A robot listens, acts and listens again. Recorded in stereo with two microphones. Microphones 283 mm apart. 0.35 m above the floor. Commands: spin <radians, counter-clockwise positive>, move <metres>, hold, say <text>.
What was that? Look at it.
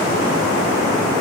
hold
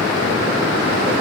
hold
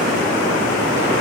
say I can't make out anything.